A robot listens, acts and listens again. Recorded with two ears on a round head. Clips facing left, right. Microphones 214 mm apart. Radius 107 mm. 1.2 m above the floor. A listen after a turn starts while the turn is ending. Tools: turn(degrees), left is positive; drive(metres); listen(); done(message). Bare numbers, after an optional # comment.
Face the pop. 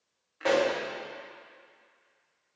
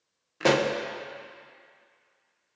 # The pop: about 60° right or 120° right.
turn(-60)
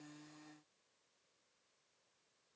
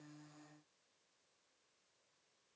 listen()
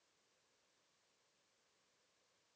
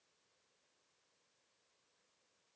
done("I heard a pop, but can't make it out now. It was about straight ahead or 60° right.")